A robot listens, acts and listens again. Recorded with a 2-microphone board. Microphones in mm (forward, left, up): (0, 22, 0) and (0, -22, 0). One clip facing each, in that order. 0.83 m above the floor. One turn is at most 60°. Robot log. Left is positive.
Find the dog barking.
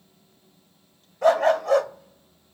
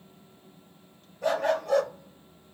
cmd yaw +60
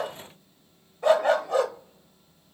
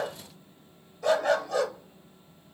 note: So it is at 30° left.
cmd yaw +30
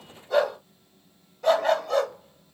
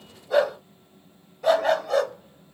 end: Found it: a dog barking, straight ahead, 1 to 2 m away.